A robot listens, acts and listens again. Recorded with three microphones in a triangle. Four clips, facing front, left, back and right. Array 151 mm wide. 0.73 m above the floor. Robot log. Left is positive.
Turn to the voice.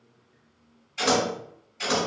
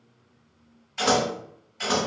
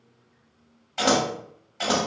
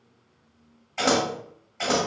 cmd idle
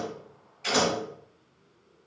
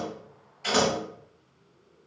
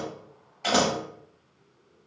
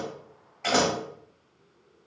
cmd idle
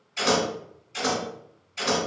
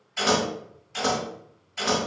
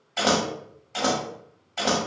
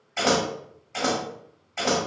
end: I can't make out anyone speaking, only scissors.